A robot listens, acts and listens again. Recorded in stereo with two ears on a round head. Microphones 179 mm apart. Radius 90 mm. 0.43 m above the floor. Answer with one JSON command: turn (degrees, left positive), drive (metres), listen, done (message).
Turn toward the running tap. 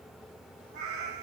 {"listen": true}
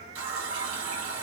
{"turn": -90}
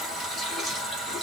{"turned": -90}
{"done": "Found it: a running tap, straight ahead, 2 to 4 m away."}